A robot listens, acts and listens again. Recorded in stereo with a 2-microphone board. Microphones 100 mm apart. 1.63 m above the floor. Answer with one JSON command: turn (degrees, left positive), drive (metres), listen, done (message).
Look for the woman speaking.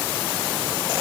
{"listen": true}
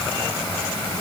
{"listen": true}
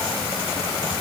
{"done": "I can't make out a woman speaking to turn to."}